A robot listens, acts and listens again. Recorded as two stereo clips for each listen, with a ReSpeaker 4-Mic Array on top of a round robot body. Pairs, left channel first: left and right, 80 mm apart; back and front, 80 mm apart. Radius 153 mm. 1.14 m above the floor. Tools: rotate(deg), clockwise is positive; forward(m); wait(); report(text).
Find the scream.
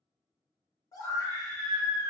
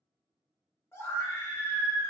rotate(-120)
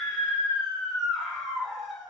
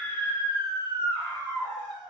rotate(10)
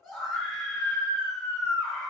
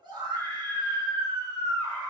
report("Facing the scream, 1 to 2 m away.")